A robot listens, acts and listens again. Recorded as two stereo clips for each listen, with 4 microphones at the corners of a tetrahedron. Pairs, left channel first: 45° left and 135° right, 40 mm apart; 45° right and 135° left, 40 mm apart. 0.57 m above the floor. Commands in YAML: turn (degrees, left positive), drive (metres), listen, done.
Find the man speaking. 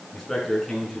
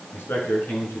turn: -40
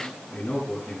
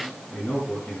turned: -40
done: "Found it: a man speaking, straight ahead."